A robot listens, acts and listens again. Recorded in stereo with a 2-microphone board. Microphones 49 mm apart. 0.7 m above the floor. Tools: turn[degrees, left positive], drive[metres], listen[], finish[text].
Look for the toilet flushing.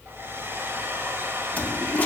Thought: The toilet flushing: about 30° left or 150° left.
Action: turn[30]
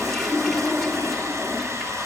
Action: finish[Facing the toilet flushing, 2 to 4 m away.]